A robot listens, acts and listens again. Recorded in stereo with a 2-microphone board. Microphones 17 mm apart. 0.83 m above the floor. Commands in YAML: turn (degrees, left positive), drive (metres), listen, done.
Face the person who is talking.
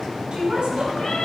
turn: -70
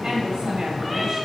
turn: -35
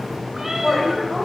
done: "Found it: a woman speaking, straight ahead."